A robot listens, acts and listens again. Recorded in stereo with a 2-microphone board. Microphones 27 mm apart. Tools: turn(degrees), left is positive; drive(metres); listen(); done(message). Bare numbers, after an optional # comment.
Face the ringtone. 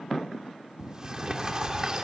listen()
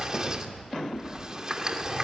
listen()
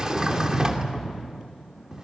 done("I can't make out a ringtone to turn to.")